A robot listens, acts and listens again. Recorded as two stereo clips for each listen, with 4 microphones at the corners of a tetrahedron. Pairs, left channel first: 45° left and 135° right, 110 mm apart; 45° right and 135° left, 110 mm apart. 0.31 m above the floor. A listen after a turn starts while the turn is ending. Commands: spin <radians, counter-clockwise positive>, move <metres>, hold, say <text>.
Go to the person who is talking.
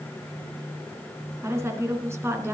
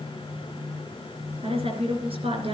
spin 2.79
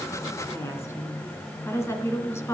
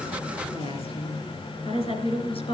spin -0.35
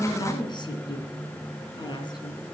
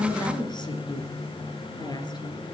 move 1.0
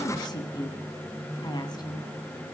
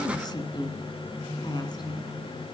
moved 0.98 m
move 1.0
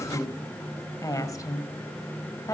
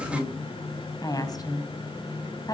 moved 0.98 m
move 1.0
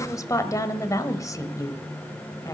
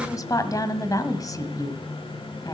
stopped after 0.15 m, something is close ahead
say I am next to the woman speaking.